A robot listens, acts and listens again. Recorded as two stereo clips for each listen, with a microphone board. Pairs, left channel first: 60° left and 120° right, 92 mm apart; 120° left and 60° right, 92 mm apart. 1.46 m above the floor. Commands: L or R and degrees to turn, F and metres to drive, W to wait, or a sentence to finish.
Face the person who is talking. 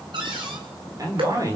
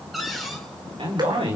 R70
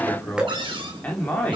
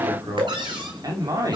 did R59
R15
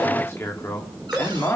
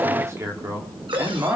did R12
Facing the man speaking, 2 to 4 m away.